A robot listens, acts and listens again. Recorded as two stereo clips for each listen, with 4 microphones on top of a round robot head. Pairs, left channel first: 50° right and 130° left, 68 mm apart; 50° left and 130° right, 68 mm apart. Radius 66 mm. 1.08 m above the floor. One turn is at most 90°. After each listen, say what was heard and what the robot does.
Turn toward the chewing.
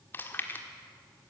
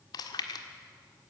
The chewing: 15° left. Turn 15° left.
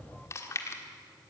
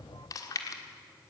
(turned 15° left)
Found it: chewing, straight ahead.